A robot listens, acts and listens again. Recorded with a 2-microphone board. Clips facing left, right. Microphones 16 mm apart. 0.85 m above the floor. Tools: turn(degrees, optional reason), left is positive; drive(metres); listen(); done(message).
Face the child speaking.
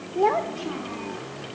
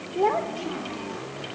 turn(degrees=30)
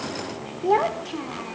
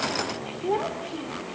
turn(degrees=140, reason="So it is at 140° left.")
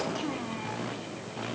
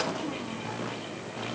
listen()
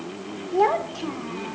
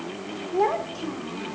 turn(degrees=15, reason="The child speaking is now 15° left.")
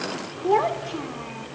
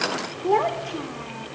done("Facing the child speaking.")